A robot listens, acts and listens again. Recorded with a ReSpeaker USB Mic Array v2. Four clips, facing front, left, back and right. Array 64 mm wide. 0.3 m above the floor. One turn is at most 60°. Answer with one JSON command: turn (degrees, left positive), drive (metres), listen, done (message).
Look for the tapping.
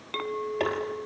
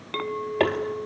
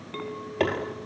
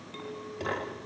{"turn": 60}
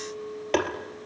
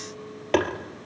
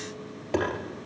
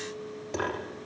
{"turn": 60}
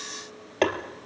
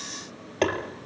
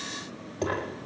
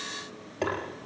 {"turn": 25}
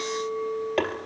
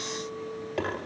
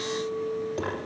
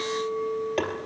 {"turn": -15}
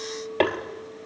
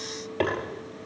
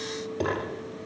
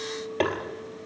{"done": "Facing the tapping."}